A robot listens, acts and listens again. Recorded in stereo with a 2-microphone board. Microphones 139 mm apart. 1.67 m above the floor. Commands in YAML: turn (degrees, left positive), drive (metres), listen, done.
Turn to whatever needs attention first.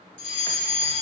turn: 40
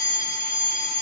turn: 100
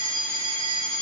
turn: 15
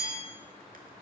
done: "Facing the fire alarm."